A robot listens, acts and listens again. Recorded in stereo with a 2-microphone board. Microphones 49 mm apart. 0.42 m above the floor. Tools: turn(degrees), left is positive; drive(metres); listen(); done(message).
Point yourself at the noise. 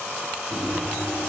turn(degrees=-35)
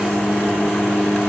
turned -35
done("Found it: a microwave, straight ahead.")